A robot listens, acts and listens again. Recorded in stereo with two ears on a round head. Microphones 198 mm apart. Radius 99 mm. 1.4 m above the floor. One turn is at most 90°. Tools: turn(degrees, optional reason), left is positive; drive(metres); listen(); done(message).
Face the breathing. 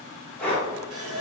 turn(degrees=30)
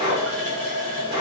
turn(degrees=-25, reason="So it is at 25° right.")
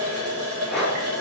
done("Facing the breathing, 1 to 2 m away.")